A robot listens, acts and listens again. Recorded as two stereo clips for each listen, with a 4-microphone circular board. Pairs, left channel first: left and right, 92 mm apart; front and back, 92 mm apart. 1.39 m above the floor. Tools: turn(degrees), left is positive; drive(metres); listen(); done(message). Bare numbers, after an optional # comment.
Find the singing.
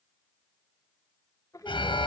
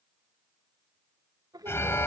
# The singing: 140° left.
turn(140)
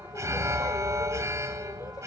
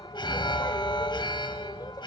listen()
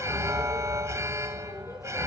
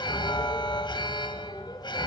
listen()
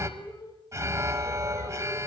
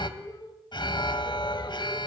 # The singing is now 40° left.
turn(40)
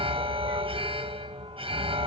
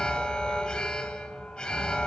listen()
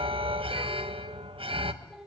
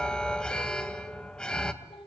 done("Facing the singing.")